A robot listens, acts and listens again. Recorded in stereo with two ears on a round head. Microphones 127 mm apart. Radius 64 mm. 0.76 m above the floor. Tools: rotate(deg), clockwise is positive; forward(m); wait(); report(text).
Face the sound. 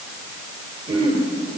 rotate(40)
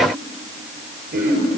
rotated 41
rotate(100)
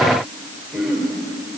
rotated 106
report("Found it: throat clearing, straight ahead.")